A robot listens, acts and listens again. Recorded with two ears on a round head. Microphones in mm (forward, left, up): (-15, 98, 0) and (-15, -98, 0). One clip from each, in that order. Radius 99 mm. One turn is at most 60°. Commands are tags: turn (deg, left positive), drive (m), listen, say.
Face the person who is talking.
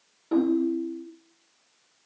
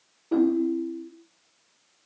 <listen/>
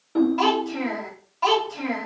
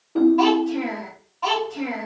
<turn deg="45"/>
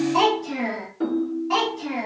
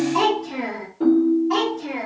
<turn deg="25"/>
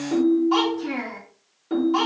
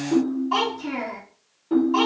<turn deg="10"/>
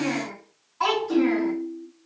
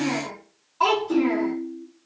<say>Found it: a child speaking, straight ahead.</say>